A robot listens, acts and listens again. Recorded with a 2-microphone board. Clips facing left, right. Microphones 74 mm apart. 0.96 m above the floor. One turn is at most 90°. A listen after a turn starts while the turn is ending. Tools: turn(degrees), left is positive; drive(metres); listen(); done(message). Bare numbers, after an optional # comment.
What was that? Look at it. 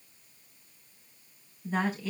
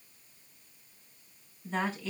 turn(30)
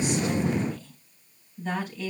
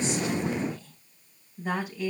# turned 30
# So it is at 10° right.
turn(-10)
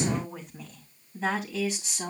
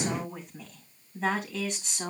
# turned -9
done("Found it: a woman speaking, straight ahead.")